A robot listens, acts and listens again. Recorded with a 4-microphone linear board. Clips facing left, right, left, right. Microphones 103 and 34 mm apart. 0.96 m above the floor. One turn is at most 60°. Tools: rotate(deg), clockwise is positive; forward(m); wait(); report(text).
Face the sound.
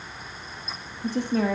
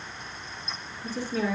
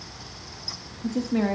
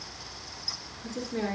rotate(-55)
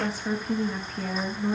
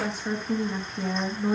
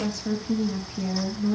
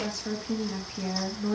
rotate(10)
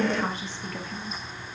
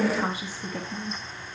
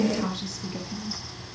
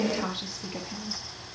rotate(20)
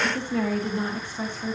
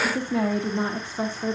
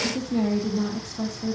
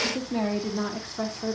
rotate(35)
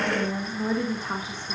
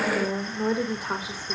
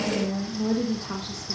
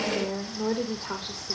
rotate(10)
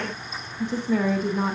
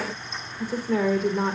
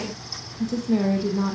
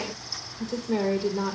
report("Facing the woman speaking, 1 to 2 m away.")